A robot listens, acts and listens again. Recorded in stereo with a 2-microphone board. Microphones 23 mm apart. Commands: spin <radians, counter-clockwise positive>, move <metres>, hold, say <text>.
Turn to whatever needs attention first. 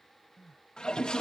spin -0.52
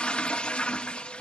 hold
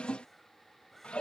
hold
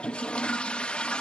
say I heard crying, but can't make it out now. It was about 15° left or 135° right.